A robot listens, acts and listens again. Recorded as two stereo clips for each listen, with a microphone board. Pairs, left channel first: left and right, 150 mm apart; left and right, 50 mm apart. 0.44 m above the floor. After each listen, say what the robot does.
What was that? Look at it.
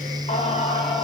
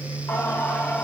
Turn 40° left.
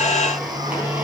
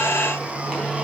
Turn 10° right.
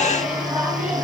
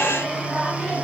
Turn 10° right.
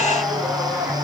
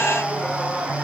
Facing the singing.